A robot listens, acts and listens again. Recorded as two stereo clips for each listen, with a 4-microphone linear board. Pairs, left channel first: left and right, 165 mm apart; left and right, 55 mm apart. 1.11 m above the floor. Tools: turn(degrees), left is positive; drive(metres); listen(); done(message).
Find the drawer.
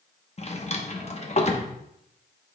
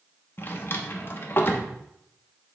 turn(degrees=40)
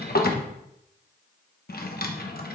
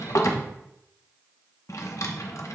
turn(degrees=100)
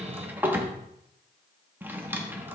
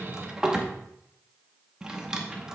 turn(degrees=-15)
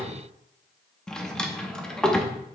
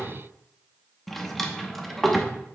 done("Facing the drawer, under 1 m away.")